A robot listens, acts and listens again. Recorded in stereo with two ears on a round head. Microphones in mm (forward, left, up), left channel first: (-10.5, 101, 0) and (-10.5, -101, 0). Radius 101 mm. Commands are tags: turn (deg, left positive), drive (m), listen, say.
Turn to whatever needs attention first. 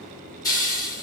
<listen/>
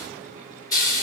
<listen/>
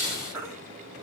<turn deg="-30"/>
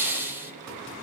<listen/>
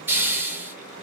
<listen/>
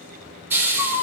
<turn deg="15"/>
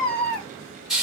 <say>Facing the baby crying, under 1 m away.</say>